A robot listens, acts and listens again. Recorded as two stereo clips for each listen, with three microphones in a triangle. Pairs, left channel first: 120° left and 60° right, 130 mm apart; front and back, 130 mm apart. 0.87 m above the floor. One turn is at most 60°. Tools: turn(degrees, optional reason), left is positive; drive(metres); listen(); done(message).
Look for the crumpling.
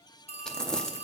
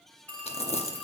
turn(degrees=35, reason="The crumpling: 35° left.")
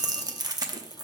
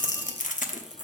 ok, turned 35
done("Found it: crumpling, straight ahead, under 1 m away.")